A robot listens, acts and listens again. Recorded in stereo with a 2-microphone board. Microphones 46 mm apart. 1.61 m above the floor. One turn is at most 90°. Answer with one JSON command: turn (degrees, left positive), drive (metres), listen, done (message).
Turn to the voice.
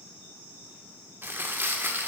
{"listen": true}
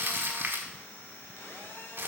{"listen": true}
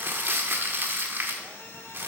{"done": "I can't make out anyone speaking, only crumpling and a phone buzzing."}